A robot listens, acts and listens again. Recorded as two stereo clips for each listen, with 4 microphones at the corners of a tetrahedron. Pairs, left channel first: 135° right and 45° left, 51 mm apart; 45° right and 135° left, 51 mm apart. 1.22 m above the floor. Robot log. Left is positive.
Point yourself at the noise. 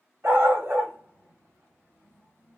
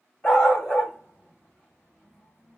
note: The dog barking: 15° left.
cmd yaw +15
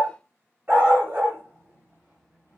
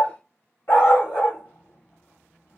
end: Facing the dog barking.